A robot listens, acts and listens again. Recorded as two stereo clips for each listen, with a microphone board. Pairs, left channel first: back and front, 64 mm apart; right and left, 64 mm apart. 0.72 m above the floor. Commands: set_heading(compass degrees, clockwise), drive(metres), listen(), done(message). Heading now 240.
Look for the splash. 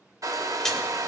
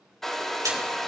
set_heading(140)
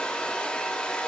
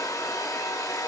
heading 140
done("Facing where the splash came from. I can't hear it now.")